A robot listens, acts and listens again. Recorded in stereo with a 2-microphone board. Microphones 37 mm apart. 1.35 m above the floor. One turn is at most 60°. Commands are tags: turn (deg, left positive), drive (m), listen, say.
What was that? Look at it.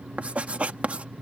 <turn deg="-35"/>
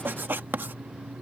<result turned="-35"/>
<turn deg="-60"/>
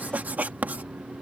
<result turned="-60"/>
<turn deg="-55"/>
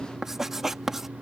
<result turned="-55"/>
<turn deg="-10"/>
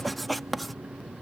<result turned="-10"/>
<say>Found it: writing, straight ahead.</say>